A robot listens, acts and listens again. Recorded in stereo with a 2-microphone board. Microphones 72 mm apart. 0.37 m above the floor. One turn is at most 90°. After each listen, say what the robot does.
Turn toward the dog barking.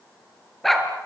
Turn 30° left.
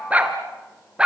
Turn 15° right.
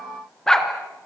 Turn 10° left.
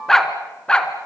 Turn 10° left.
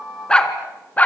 Turn 20° left.
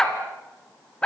Turn 10° left.
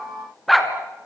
Facing the dog barking.